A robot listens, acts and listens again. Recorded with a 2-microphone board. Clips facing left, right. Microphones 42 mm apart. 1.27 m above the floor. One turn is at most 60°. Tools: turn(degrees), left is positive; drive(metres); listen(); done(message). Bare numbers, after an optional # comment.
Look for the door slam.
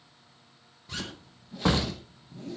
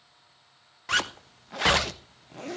# The door slam: about 15° right or 165° right.
turn(-15)
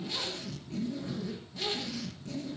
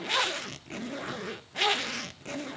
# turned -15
listen()
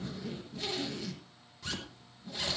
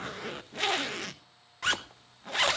done("I heard a door slam, but can't make it out now. It was about straight ahead or 150° right.")